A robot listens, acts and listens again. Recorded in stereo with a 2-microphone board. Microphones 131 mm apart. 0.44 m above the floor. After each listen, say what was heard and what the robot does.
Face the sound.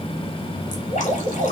Turn 90° left.
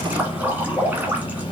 So it is at 15° right. Turn 15° right.
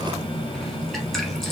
Keep listening.
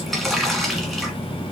Facing the dripping.